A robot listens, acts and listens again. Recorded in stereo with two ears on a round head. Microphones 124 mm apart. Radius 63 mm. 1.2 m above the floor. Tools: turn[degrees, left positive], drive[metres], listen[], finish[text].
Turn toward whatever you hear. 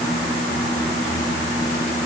Action: listen[]
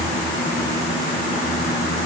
Action: listen[]
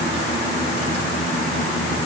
Action: finish[I can't make out anything to turn to.]